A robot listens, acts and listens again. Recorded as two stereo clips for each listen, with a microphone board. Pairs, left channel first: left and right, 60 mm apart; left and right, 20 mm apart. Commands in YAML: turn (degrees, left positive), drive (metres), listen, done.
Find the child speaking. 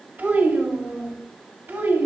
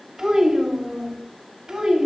turn: -35
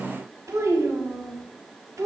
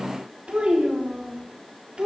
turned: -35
turn: -110
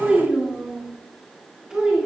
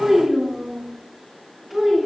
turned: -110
turn: -15
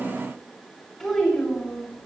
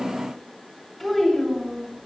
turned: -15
done: "Found it: a child speaking, straight ahead, over 4 m away."